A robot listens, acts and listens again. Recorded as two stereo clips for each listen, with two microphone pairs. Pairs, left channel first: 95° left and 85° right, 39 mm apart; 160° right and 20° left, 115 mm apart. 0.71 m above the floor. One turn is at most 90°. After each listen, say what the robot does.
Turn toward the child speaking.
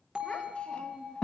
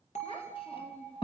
Turn 90° left.
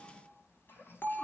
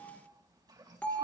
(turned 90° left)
Turn 70° left.
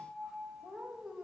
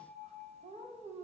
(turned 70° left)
Found it: a child speaking, straight ahead, 2 to 4 m away.